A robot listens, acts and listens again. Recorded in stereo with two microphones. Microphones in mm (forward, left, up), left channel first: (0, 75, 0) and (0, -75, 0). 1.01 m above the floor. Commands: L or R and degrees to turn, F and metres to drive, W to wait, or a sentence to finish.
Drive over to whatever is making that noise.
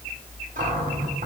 R60
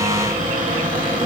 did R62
R60
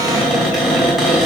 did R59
F1.0
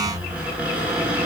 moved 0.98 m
R10
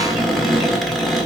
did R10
F1.0
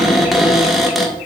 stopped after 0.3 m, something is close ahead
Arrived at the cupboard door, straight ahead.